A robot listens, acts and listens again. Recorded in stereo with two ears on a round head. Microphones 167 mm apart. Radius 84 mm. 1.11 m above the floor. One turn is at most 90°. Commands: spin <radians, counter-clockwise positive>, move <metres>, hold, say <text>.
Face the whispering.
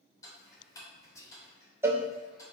spin 0.26
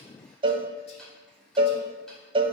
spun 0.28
hold
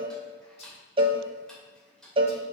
hold
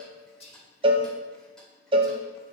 spin 1.57
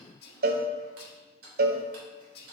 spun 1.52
spin 0.96
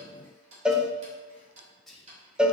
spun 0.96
say Facing the whispering.